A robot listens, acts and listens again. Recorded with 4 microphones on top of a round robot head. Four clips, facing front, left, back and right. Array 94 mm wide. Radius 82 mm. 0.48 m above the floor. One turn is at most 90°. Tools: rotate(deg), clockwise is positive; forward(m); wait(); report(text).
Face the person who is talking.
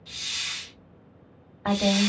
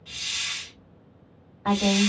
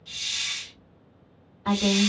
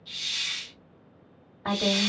report("Facing the woman speaking, 1 to 2 m away.")